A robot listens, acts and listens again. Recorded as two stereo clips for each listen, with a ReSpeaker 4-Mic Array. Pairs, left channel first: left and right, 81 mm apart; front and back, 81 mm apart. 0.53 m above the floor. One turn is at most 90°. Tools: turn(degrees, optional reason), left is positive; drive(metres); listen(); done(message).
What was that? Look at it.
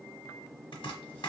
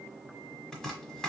turn(degrees=85, reason="The chopping: 85° left.")
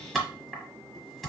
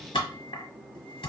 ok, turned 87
done("Found it: chopping, straight ahead.")